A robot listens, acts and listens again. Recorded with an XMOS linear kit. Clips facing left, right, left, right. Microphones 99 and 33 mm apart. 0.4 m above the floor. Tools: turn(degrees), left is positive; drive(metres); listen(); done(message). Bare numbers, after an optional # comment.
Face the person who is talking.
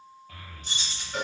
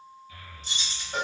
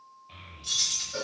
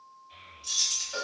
# The child speaking: about 60° left or 120° left.
turn(60)
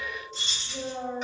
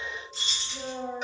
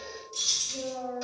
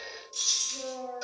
# So it is at 40° left.
turn(40)
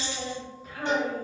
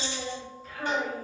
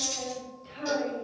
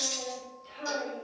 # The child speaking is now 10° left.
turn(10)
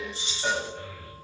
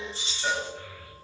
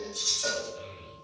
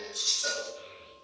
done("Found it: a child speaking, straight ahead, under 1 m away.")